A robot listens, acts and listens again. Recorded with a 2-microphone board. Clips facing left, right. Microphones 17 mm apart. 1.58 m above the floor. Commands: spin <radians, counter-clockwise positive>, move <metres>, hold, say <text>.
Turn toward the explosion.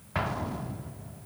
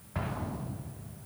spin 0.61
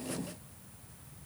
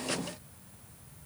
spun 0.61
hold
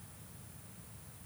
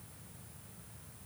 say I heard an explosion, but can't make it out now. It was about straight ahead or 110° left.